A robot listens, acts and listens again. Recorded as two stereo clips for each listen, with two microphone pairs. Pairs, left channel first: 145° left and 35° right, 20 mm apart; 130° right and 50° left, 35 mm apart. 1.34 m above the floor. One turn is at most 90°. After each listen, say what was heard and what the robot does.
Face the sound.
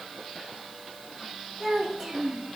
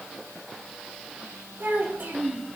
The child speaking: 35° left. Turn 35° left.
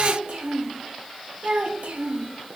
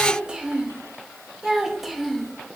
The child speaking is now 35° right. Turn 35° right.
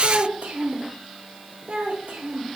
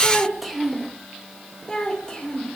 The child speaking is now 55° right. Turn 55° right.
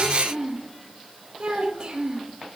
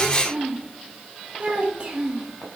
Facing the child speaking.